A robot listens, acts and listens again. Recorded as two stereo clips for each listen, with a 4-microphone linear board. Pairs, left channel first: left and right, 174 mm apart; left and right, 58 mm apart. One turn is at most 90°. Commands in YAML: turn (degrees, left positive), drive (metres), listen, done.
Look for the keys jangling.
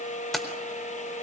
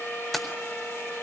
turn: 30
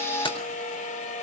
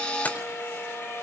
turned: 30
listen: true
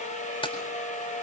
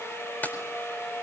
turn: 90
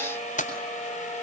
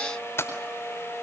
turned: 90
turn: 55
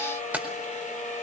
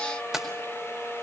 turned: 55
turn: -10
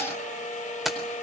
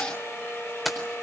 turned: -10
done: "Found it: keys jangling, straight ahead, over 4 m away."